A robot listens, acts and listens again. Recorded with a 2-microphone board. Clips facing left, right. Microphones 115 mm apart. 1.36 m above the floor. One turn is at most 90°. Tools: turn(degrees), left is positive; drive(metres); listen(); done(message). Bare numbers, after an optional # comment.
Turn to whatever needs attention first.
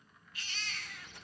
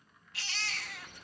turn(-90)
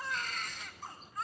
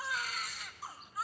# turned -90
done("Found it: a baby crying, straight ahead.")